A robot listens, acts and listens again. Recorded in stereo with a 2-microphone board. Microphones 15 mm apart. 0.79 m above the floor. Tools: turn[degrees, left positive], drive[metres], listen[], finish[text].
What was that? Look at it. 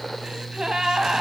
Thought: The gasp: about 60° right or 120° right.
Action: turn[-60]
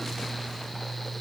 Action: listen[]
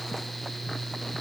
Action: finish[I heard a gasp, but can't make it out now. It was about straight ahead or 60° right.]